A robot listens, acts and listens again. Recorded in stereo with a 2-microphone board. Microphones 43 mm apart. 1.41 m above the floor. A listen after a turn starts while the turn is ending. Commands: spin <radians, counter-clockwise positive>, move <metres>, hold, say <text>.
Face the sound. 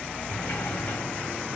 spin 0.79
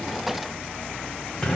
say Facing the sliding door.